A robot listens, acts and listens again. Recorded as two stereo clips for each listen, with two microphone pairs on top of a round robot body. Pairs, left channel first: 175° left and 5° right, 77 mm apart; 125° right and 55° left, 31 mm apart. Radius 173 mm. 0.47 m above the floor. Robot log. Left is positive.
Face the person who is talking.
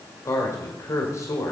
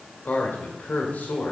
note: The man speaking: 150° right.
cmd yaw -150
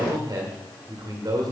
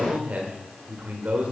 note: The man speaking is now 25° left.
cmd yaw +25
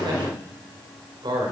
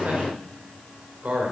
note: The man speaking is now 15° left.
cmd yaw +15
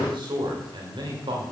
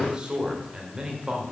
end: Found it: a man speaking, straight ahead, 2 to 4 m away.